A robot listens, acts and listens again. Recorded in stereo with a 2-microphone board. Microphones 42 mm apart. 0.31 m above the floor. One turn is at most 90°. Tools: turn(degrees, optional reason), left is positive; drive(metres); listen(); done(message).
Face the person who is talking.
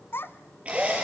turn(degrees=70, reason="The child speaking: about 70° left or 110° left.")
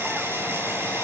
listen()
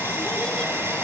listen()
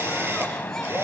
done("I heard a child speaking, but can't make it out now. It was about straight ahead or 40° left.")